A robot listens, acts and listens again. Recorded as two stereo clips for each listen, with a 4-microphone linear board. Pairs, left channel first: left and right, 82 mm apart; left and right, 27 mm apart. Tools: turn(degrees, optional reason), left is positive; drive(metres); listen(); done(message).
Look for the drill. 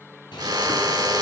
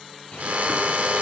turn(degrees=-55, reason="The drill: about 55° right or 125° right.")
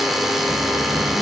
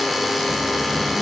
done("Facing the drill.")